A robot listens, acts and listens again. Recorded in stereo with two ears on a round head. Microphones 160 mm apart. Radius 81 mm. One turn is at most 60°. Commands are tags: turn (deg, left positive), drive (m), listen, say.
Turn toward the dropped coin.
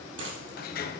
<turn deg="-60"/>
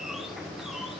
<listen/>
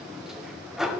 <say>I heard a dropped coin, but can't make it out now. It was about 15° right or 45° right.</say>